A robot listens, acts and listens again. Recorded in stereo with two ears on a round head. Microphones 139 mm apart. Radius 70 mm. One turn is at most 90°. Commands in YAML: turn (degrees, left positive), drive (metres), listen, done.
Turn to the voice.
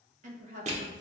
turn: -50
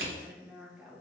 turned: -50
done: "Found it: a woman speaking, straight ahead, 1 to 2 m away."